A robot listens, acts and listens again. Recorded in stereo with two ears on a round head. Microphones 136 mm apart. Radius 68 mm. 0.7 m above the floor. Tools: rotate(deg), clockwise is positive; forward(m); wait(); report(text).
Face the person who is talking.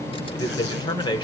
rotate(-30)
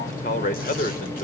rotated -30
rotate(-120)
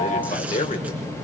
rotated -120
rotate(-50)
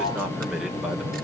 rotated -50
report("Found it: a man speaking, straight ahead, 2 to 4 m away.")